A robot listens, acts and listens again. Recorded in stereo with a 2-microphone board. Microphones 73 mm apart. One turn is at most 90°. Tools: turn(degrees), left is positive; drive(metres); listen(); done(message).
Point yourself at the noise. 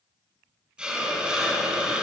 turn(degrees=-30)
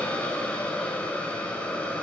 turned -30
turn(degrees=20)
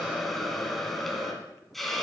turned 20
done("Found it: a hiss, straight ahead, 2 to 4 m away.")